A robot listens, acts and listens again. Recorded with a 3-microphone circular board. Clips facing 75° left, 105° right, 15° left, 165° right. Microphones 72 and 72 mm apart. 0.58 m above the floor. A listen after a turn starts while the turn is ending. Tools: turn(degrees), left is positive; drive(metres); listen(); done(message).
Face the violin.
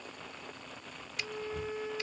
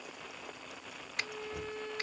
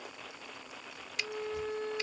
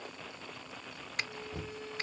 done("Facing the violin.")